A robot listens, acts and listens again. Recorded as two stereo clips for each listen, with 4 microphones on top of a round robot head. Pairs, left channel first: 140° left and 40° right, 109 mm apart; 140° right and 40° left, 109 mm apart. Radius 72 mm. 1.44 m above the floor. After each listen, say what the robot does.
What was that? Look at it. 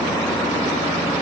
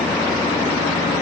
Keep listening.
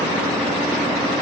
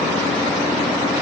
Keep listening.
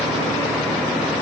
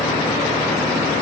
I can't make out anything.